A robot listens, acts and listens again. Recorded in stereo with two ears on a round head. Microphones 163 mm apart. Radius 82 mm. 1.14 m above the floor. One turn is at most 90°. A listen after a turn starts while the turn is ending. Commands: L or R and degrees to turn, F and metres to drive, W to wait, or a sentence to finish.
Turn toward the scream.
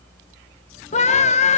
L40
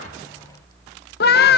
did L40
L90
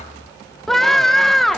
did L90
Found it: a scream, straight ahead, 1 to 2 m away.